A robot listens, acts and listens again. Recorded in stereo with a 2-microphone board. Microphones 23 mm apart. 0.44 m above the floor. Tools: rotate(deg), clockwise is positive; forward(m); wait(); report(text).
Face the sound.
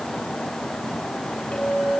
rotate(-50)
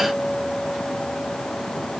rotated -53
report("Found it: a clink, straight ahead, over 4 m away.")